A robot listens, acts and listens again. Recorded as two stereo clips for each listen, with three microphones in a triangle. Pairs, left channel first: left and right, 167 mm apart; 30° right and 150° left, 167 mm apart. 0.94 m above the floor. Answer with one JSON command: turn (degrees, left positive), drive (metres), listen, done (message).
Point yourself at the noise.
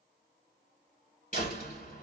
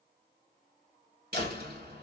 {"turn": 125}
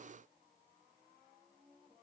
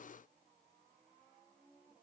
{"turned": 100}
{"turn": 25}
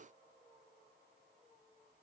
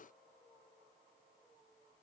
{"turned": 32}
{"turn": -10}
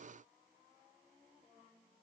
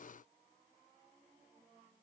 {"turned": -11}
{"done": "I heard a door slam from this way, but can't make it out now."}